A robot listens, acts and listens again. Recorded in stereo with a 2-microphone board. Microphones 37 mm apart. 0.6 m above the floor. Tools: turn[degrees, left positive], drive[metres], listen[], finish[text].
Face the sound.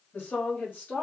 Thought: The woman speaking: about 65° left or 115° left.
Action: turn[65]
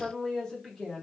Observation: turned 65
Action: finish[Found it: a woman speaking, straight ahead.]